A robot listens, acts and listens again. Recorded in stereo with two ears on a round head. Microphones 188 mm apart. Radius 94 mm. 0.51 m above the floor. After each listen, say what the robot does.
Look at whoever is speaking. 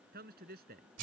Turn 45° right.
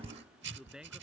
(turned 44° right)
Facing the man speaking.